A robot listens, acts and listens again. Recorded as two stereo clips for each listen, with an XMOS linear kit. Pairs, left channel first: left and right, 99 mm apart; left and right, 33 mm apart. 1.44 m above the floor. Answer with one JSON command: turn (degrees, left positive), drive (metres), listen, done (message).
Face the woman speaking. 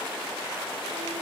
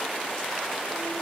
{"listen": true}
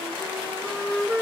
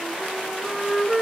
{"listen": true}
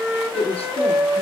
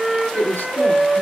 {"turn": 90}
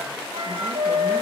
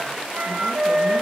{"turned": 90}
{"listen": true}
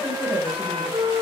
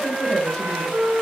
{"listen": true}
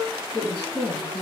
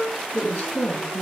{"turn": 55}
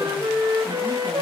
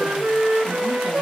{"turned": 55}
{"listen": true}
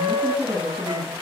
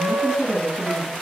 {"turn": 20}
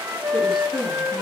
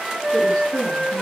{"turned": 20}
{"done": "Found it: a woman speaking, straight ahead, 2 to 4 m away."}